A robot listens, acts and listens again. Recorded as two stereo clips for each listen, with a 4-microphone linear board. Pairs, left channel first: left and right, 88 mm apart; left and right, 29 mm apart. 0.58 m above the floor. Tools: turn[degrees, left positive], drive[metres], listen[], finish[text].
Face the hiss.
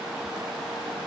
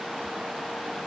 Action: listen[]
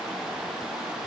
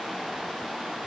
Action: listen[]
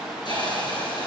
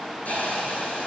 Thought: The hiss: about 60° left or 120° left.
Action: turn[60]
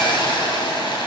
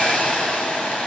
Thought: So it is at 60° left.
Action: turn[60]
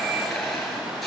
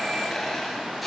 Action: finish[Found it: a hiss, straight ahead, over 4 m away.]